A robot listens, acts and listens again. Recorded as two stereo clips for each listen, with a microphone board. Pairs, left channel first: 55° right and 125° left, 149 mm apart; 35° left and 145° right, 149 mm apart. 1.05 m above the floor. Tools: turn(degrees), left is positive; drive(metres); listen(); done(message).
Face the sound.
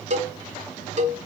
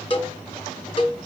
turn(degrees=90)
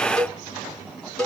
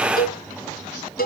turn(degrees=30)
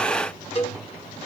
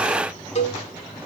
done("Found it: a cowbell, straight ahead.")